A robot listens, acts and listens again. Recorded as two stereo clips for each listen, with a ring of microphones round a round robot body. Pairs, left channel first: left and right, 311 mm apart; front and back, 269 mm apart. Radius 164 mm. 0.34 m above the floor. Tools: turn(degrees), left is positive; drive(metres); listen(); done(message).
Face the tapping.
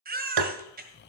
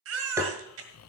turn(degrees=-100)
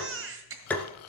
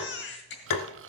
done("Facing the tapping.")